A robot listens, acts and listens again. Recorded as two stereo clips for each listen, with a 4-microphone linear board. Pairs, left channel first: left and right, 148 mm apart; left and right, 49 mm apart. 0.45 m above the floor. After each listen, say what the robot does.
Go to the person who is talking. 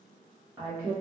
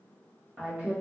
Turn 25° right.
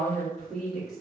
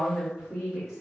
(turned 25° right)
Drive 1.0 m forward.
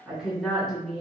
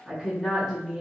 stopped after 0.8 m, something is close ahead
Arrived at the woman speaking, straight ahead.